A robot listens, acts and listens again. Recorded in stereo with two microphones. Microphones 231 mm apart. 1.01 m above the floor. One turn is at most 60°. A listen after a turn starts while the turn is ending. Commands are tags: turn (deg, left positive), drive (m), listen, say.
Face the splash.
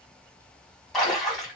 <turn deg="30"/>
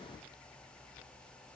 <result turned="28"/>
<listen/>
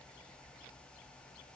<say>I heard a splash, but can't make it out now. It was about 25° right or 150° left.</say>